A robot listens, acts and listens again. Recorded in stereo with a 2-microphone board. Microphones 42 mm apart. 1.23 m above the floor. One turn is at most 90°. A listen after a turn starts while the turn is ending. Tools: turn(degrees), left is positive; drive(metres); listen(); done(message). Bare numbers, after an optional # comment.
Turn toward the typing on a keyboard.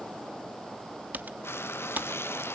# The typing on a keyboard: about 45° right or 135° right.
turn(-45)
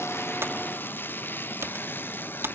# So it is at 90° right.
turn(-90)
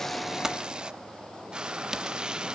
listen()
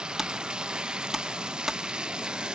# The typing on a keyboard is now 10° right.
turn(-10)
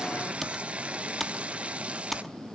done("Facing the typing on a keyboard, 1 to 2 m away.")